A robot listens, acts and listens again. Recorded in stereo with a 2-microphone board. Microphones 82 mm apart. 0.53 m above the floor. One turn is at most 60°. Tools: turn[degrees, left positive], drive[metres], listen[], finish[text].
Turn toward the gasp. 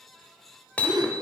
Thought: The gasp: about 55° right or 125° right.
Action: turn[-55]
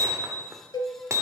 Action: listen[]
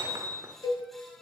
Action: finish[I heard a gasp, but can't make it out now. It was about straight ahead or 70° right.]